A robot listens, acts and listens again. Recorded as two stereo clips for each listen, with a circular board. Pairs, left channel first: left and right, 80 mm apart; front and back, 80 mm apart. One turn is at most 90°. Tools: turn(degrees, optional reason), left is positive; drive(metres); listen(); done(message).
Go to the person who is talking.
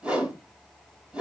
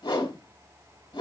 listen()
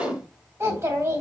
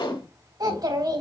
turn(degrees=-90, reason="The child speaking: 145° right.")
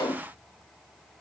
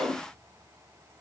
turn(degrees=-55, reason="Nothing new. It was at 55° right.")
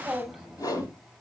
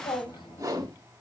drive(metres=1.0)
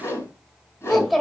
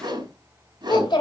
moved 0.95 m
drive(metres=1.0)
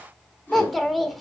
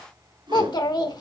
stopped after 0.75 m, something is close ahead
done("Arrived at the child speaking, straight ahead.")